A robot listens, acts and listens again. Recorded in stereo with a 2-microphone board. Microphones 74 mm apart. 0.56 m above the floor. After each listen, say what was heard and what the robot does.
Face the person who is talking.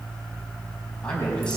Turn 30° left.
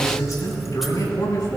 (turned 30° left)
So it is at 140° left. Turn 140° left.
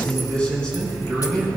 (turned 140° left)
The man speaking is now 15° left. Turn 15° left.
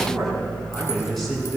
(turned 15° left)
Facing the man speaking.